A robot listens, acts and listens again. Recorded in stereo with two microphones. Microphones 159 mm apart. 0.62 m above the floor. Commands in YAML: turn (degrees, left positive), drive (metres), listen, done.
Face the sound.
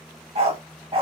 turn: -35
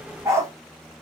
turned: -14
turn: -15
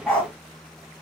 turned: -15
done: "Facing the dog barking, 1 to 2 m away."